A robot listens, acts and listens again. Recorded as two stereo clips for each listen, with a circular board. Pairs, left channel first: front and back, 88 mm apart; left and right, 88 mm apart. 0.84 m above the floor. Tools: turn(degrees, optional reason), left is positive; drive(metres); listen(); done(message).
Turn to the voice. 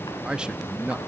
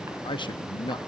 turn(degrees=100, reason="The man speaking: 100° left.")
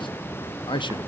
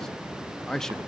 done("Facing the man speaking.")